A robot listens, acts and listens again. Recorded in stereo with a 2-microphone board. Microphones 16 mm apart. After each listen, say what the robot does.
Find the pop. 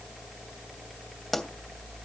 Turn 25° left.
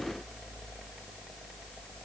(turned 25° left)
Keep listening.
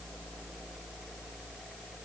I heard a pop, but can't make it out now. It was about straight ahead or 130° left.